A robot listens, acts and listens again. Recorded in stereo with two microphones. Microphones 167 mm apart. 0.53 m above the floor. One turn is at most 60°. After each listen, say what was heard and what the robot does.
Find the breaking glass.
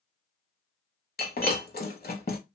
The breaking glass: about 65° left or 115° left. Turn 60° left.
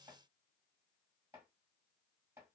Keep listening.
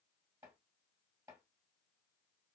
I heard breaking glass, but can't make it out now. It was about 5° left or 55° left.